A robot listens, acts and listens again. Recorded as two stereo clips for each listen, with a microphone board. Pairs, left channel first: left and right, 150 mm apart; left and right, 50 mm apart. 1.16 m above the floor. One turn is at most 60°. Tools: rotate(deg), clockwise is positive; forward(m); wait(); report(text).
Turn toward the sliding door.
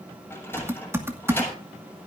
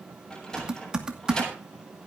rotate(-30)
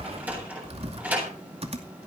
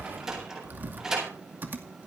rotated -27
rotate(10)
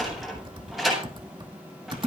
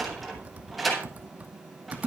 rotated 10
report("Facing the sliding door.")